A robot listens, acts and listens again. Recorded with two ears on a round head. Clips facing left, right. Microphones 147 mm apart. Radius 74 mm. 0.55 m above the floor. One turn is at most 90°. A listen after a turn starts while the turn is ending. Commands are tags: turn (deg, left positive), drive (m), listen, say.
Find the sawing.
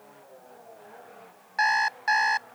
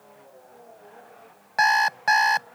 <listen/>
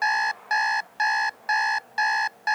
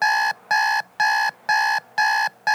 <listen/>
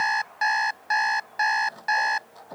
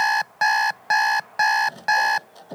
<turn deg="-30"/>
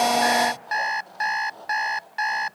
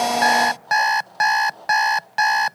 <say>Found it: sawing, straight ahead.</say>